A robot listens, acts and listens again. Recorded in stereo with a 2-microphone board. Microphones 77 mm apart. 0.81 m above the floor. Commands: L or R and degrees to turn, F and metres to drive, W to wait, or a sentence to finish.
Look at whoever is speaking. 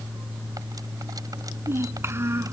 R35
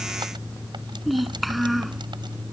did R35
Facing the child speaking.